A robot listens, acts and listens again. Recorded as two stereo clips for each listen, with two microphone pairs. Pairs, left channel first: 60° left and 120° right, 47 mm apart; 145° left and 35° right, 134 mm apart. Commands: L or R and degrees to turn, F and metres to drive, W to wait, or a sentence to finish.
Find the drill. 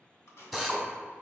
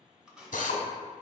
L150
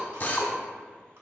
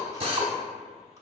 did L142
L10
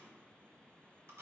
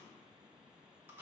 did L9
W
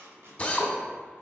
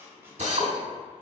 Facing the drill, under 1 m away.